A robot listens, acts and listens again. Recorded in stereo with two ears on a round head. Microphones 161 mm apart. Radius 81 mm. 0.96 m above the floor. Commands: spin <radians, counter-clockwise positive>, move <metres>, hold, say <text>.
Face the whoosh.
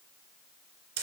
hold
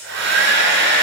hold
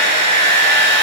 say I can't make out a whoosh, only a hair dryer.